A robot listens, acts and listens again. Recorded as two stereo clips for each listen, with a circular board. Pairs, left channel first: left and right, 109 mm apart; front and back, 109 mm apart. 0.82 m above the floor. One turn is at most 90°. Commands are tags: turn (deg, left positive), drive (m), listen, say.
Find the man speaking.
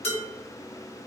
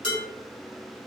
<listen/>
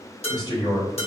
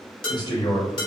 <turn deg="45"/>
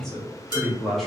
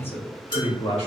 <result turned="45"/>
<say>Found it: a man speaking, straight ahead, 1 to 2 m away.</say>